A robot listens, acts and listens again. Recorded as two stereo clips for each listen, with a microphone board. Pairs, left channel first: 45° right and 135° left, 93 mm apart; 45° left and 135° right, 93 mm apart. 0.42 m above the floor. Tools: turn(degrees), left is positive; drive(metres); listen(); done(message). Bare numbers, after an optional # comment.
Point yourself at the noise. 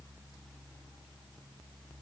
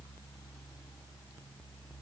listen()
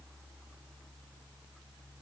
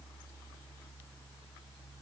listen()
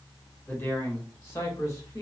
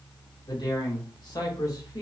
done("Found it: a man speaking, straight ahead, 1 to 2 m away.")